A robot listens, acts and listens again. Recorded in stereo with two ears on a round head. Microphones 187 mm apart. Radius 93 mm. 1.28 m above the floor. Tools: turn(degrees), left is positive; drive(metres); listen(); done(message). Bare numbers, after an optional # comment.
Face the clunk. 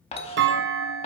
# The clunk: about 55° right or 125° right.
turn(-55)
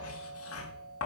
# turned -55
listen()
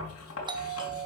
done("I heard a clunk, but can't make it out now. It was about straight ahead or 70° right.")